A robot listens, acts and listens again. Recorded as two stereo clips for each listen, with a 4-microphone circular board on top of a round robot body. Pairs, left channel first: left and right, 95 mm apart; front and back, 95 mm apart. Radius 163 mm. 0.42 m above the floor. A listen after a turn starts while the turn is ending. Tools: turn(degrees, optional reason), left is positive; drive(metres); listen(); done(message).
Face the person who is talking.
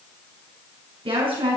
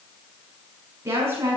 turn(degrees=-115, reason="The woman speaking: 115° right.")
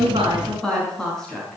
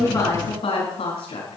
done("Facing the woman speaking, over 4 m away.")